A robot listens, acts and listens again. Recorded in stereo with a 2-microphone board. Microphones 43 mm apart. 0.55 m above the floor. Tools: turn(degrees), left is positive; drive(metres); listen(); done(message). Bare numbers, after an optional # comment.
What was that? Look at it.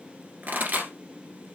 # The pop: about 50° right or 130° right.
turn(-50)
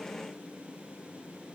listen()
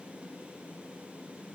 done("I heard a pop, but can't make it out now. It was about straight ahead or 80° right.")